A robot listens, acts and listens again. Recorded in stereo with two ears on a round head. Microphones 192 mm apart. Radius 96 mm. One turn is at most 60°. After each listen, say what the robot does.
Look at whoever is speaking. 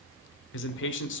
Turn 60° left.
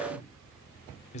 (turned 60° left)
Turn 40° left.
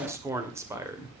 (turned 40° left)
Turn 15° right.
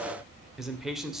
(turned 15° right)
Facing the man speaking.